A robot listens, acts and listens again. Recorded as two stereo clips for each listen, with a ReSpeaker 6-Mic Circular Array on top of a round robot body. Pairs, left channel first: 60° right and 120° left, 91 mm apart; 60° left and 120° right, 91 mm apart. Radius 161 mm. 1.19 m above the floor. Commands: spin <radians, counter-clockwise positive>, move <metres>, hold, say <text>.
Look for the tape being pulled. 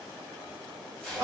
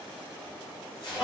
spin 0.44
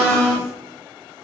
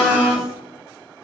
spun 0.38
hold
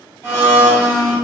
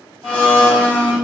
hold
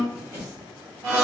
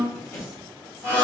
say Facing the tape being pulled.